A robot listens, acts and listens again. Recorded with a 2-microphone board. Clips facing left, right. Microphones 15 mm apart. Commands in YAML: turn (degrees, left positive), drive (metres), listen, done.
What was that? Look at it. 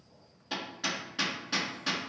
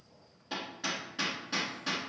turn: 15
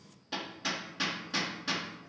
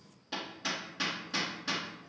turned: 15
done: "Found it: hammering, straight ahead."